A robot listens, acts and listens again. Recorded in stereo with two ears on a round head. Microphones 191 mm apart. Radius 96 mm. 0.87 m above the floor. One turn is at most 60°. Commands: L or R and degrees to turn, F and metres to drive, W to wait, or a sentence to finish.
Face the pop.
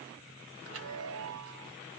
W
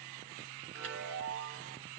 W
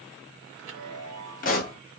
L40
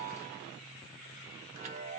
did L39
W
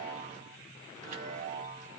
I heard a pop, but can't make it out now. It was about straight ahead or 100° left.